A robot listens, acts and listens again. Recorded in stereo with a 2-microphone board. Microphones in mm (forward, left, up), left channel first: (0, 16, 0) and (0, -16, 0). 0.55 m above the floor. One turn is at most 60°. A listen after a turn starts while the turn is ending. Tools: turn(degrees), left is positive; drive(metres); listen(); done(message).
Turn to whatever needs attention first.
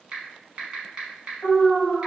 turn(degrees=60)
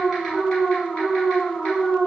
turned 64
turn(degrees=35)
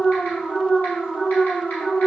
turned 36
done("Found it: an alarm, straight ahead.")